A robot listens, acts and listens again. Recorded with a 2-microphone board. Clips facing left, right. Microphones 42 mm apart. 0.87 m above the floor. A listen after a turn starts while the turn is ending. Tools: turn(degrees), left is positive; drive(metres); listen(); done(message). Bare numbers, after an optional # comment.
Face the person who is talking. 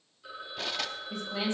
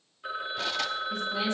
# The woman speaking: about 25° left or 155° left.
turn(25)
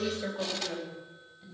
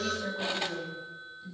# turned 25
# So it is at 135° left.
turn(135)
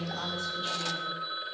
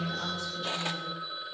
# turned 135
listen()
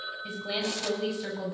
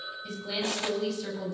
# The woman speaking is now 15° left.
turn(15)
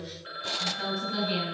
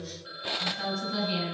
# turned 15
done("Facing the woman speaking.")